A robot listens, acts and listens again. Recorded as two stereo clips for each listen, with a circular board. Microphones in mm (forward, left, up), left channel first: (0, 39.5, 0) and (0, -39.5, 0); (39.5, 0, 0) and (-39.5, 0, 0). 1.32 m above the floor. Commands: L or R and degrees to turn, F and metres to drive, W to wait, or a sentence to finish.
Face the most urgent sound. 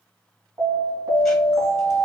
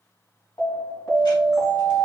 R40
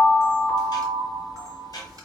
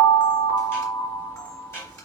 L10
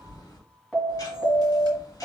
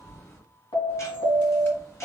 Facing the alarm.